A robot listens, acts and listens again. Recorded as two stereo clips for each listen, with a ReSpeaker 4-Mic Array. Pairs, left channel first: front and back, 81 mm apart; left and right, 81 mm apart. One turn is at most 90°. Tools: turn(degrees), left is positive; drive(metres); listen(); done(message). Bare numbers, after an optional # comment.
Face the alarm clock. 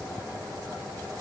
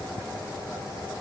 listen()
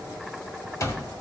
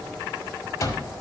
# The alarm clock: 45° left.
turn(45)
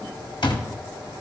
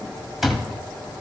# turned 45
done("Facing the alarm clock, 1 to 2 m away.")